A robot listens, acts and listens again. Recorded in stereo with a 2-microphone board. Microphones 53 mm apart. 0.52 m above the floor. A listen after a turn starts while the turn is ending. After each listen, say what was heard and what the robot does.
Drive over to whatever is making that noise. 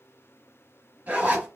The zipper: about 30° right or 150° right. Turn 30° right.
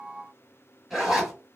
Drive 1.0 m forward.
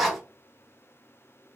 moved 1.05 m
Drive 1.0 m forward.
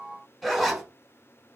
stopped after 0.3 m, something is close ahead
Arrived at the zipper, straight ahead.